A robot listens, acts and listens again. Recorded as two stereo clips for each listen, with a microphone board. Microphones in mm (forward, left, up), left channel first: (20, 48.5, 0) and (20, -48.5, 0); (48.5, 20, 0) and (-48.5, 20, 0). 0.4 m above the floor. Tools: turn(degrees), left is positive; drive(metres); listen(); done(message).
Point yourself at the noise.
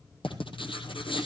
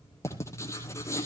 turn(degrees=60)
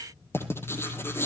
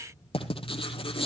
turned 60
turn(degrees=25)
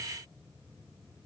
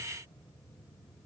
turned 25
listen()
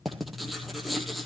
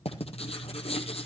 done("Found it: writing, straight ahead, 2 to 4 m away.")